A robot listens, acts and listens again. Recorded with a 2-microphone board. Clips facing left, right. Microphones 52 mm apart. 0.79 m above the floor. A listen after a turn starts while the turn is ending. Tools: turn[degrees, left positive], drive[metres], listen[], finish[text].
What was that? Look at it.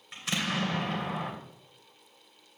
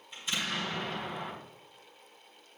Action: turn[90]
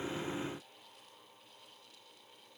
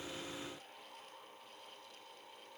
Action: finish[I heard an explosion from this way, but can't make it out now.]